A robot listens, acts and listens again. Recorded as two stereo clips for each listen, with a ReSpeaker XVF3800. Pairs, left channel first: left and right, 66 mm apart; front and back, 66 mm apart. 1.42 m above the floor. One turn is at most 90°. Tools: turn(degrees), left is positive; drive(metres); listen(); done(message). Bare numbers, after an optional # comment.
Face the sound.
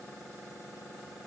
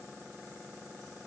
listen()
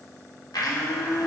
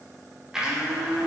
# The blender: 100° left.
turn(90)
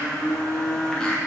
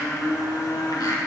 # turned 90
# The blender is now 10° left.
turn(10)
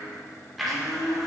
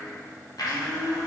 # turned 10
done("Facing the blender, 1 to 2 m away.")